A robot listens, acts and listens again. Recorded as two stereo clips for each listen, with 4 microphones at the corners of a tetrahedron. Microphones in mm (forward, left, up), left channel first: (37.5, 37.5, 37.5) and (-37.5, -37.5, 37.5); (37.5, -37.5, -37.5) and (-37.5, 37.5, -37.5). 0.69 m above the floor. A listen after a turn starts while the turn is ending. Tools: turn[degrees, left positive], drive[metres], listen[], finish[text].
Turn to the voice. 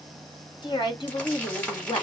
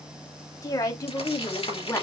Thought: The woman speaking: 15° left.
Action: turn[15]
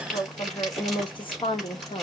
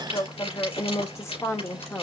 Thought: The woman speaking is now 25° left.
Action: turn[25]
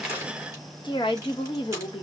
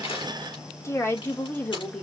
Thought: The woman speaking is now 30° left.
Action: turn[30]
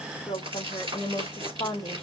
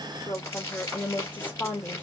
Thought: The woman speaking is now 25° left.
Action: turn[25]
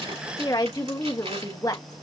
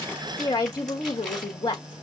Action: finish[Facing the woman speaking.]